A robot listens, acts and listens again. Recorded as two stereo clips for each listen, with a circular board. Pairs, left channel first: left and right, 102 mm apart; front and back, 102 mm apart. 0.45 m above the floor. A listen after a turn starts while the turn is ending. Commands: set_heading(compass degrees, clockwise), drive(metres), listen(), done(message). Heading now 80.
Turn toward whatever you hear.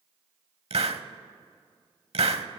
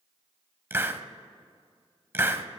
set_heading(190)
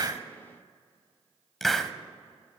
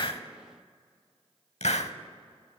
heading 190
done("Facing the hiss, under 1 m away.")